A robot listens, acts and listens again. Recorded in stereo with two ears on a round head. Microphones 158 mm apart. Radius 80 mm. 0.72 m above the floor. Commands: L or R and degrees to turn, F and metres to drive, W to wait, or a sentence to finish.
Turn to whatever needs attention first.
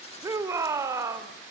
R15
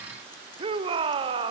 R150
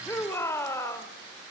L15
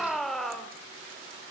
Facing the shout.